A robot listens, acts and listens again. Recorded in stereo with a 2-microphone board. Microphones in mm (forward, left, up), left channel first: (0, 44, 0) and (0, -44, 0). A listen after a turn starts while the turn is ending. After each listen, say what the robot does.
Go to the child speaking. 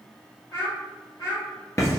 Turn 45° left.
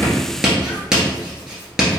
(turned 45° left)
Keep listening.
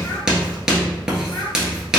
Keep listening.
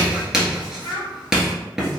Turn 95° left.
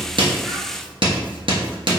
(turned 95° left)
Keep listening.
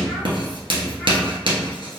Keep listening.
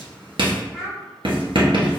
Drive 1.0 m forward.
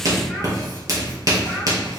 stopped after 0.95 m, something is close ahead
Keep listening.
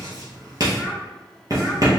Keep listening.
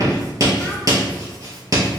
I heard a child speaking from this way, but can't make it out now. I did not reach it.